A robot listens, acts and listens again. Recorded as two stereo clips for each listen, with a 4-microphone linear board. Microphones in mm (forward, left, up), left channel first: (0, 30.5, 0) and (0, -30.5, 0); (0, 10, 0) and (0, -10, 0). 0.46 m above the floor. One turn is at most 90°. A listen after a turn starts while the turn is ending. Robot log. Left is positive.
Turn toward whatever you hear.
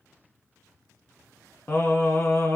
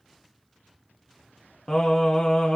note: The singing: about 50° left or 130° left.
cmd yaw +50
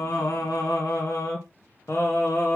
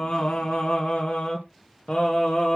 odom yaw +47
note: So it is at 55° left.
cmd yaw +55
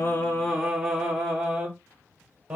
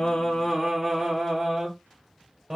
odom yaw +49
note: The singing is now 15° right.
cmd yaw -15
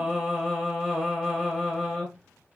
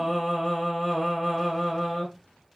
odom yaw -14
end: Found it: singing, straight ahead, 2 to 4 m away.